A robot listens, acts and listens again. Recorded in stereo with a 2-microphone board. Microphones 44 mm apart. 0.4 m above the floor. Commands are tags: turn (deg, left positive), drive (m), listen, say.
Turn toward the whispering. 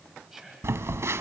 <turn deg="-30"/>
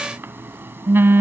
<listen/>
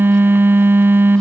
<listen/>
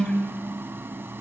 <say>I heard whispering, but can't make it out now. It was about 20° left or 140° right.</say>